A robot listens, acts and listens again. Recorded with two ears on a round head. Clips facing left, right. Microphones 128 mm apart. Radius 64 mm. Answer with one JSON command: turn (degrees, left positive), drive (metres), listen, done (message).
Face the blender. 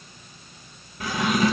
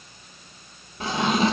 {"listen": true}
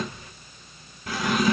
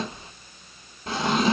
{"listen": true}
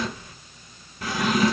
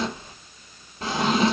{"done": "I can't make out a blender to turn to."}